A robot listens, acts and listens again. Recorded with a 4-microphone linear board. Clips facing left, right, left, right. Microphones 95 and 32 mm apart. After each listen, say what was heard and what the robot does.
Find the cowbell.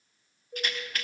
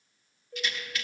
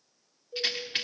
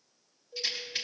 Turn 30° left.
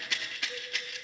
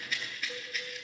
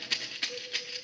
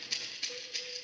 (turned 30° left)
Keep listening.
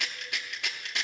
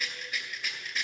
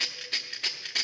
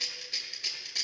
Keep listening.
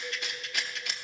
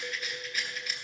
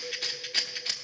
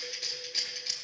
I heard a cowbell, but can't make it out now. It was about 20° right or 140° left.